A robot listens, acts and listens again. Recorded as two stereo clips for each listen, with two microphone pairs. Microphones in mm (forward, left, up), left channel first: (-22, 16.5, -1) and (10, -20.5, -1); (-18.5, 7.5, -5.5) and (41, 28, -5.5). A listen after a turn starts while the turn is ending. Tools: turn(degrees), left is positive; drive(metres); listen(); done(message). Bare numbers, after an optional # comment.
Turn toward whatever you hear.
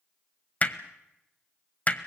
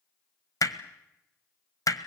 # The hammering: 175° right.
turn(-175)
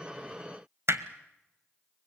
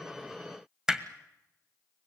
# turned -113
# The hammering is now 60° right.
turn(-60)
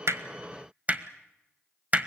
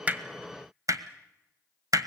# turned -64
done("Facing the hammering.")